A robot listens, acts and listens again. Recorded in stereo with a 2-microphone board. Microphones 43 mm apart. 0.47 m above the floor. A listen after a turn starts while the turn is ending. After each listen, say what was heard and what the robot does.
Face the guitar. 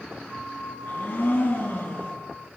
Keep listening.
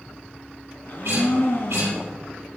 The guitar: about 70° right or 110° right. Turn 70° right.
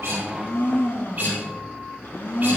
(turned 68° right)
So it is at 40° right. Turn 40° right.
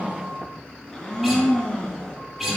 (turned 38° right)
Facing the guitar, over 4 m away.